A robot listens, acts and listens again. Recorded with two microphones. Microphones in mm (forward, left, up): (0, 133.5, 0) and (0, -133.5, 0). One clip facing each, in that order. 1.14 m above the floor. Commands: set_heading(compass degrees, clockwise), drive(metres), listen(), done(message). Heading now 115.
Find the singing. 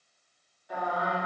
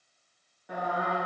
set_heading(185)
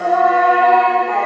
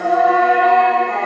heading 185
set_heading(225)
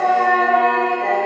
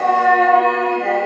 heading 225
set_heading(240)
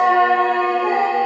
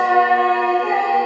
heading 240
done("Facing the singing.")